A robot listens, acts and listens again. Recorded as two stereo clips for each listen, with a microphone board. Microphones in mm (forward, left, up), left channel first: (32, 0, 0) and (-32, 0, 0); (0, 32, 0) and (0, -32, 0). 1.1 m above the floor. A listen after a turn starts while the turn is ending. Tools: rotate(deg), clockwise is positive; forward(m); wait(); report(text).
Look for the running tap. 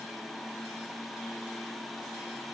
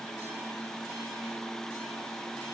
wait()
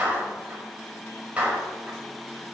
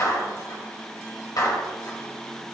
wait()
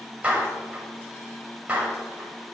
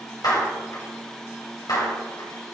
report("I can't make out a running tap, only a clap.")